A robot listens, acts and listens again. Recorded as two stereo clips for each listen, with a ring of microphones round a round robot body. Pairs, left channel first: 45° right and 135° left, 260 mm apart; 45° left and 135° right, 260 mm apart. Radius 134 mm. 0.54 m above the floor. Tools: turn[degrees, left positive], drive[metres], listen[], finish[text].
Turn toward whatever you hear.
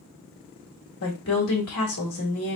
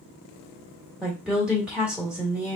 Thought: The woman speaking: 50° right.
Action: turn[-50]
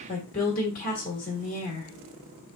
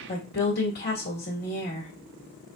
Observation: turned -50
Action: finish[Found it: a woman speaking, straight ahead.]